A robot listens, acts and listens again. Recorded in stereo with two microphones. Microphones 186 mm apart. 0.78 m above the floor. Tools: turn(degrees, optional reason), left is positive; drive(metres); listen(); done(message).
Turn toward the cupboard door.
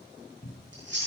turn(degrees=70, reason="The cupboard door: about 70° left or 110° left.")
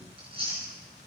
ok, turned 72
listen()
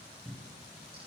done("Found it: a cupboard door, straight ahead.")